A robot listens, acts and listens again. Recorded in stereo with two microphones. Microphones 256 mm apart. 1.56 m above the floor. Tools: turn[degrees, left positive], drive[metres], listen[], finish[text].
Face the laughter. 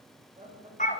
Thought: The laughter: about 25° right or 155° right.
Action: turn[-25]
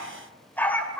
Action: listen[]
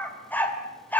Action: listen[]
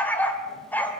Action: finish[I heard laughter, but can't make it out now. It was about straight ahead or 130° right.]